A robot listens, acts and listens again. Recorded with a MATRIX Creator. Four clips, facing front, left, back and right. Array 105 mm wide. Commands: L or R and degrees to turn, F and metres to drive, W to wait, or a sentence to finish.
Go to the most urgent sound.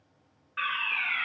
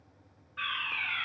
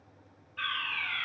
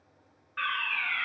R30
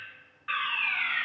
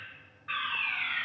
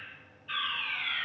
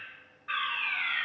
F1.0
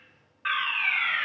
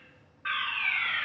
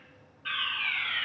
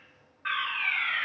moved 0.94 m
F1.0
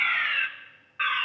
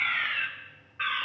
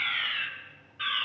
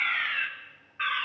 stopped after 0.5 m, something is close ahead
I am next to the fire alarm.